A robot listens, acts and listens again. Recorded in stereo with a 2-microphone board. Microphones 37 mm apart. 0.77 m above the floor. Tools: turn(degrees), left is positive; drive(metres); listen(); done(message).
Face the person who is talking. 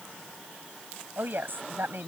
turn(degrees=-60)
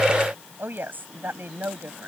turn(degrees=-60)
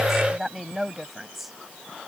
done("Facing the woman speaking.")